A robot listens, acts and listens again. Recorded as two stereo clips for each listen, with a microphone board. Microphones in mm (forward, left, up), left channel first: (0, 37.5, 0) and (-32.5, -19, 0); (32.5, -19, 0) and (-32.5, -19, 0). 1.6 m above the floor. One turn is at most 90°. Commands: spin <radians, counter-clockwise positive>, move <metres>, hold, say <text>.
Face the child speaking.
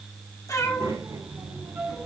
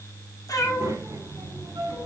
spin -1.57
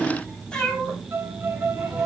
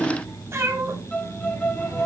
spin -0.52
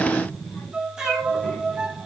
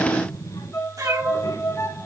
say Found it: a child speaking, straight ahead.